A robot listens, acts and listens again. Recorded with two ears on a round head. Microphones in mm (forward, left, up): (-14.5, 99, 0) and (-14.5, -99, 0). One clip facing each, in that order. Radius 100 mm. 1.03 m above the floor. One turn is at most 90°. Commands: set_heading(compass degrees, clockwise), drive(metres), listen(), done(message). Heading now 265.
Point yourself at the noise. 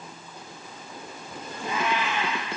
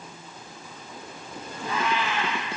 set_heading(245)
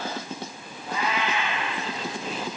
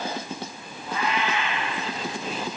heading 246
set_heading(156)
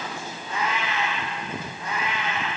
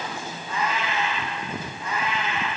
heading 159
set_heading(104)
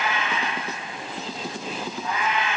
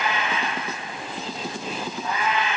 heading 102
done("Facing the cat meowing, over 4 m away.")